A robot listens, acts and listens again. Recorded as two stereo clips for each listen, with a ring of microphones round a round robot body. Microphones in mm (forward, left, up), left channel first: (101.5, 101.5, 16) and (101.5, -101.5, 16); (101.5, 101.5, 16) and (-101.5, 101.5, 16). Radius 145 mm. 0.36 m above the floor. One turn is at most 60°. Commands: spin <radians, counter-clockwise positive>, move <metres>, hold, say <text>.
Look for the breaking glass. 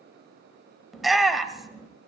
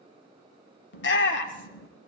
hold
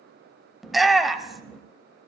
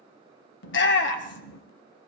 hold
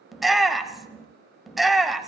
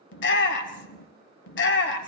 say I can't make out breaking glass to turn to.